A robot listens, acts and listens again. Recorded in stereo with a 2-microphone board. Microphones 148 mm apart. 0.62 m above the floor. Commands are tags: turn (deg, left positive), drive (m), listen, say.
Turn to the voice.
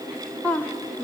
<turn deg="30"/>
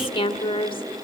<turn deg="135"/>
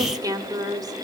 <turn deg="-30"/>
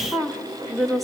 <say>Facing the woman speaking.</say>